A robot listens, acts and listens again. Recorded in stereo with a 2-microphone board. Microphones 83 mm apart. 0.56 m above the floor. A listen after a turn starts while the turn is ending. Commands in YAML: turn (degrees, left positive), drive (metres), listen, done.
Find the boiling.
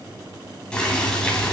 turn: 30
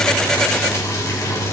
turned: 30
turn: 140
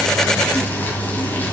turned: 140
turn: 25
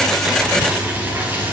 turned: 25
turn: -25
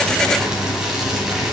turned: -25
done: "Found it: boiling, straight ahead."